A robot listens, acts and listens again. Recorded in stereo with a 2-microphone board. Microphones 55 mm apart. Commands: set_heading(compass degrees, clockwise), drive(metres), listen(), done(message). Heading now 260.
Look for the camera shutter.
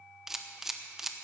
set_heading(290)
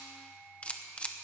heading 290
set_heading(265)
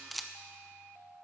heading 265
done("Facing the camera shutter.")